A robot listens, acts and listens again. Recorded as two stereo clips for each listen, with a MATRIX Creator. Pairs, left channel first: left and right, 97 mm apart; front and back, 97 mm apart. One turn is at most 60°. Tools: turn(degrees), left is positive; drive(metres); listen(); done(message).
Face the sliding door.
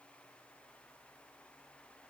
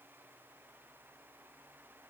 listen()
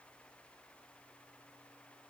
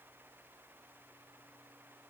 listen()
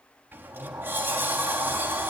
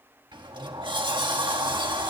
turn(degrees=-60)
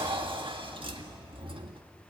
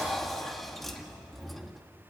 turn(degrees=-60)
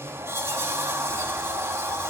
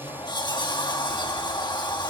turn(degrees=-30)
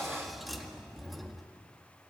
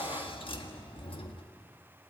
done("Found it: a sliding door, straight ahead.")